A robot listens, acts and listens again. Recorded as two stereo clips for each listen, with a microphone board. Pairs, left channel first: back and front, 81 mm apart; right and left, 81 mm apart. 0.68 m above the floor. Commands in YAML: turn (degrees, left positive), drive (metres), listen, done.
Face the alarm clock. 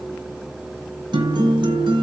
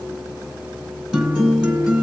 listen: true
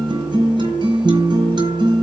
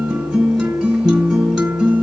listen: true
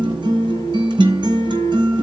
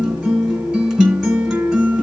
done: "I can't make out an alarm clock, only a guitar."